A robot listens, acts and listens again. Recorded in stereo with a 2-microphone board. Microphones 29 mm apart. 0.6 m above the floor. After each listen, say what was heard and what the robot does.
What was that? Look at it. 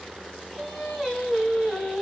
Turn 30° left.
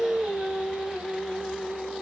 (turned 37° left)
So it is at 20° right. Turn 20° right.
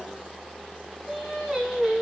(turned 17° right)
Facing the singing.